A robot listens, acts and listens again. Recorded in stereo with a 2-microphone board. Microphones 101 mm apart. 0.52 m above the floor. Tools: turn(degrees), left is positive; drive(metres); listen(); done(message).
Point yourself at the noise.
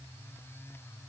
listen()
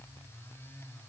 listen()
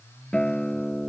turn(degrees=30)
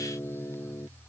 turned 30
turn(degrees=145)
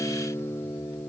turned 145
turn(degrees=40)
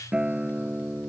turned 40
turn(degrees=-10)
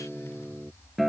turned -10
done("Facing the guitar.")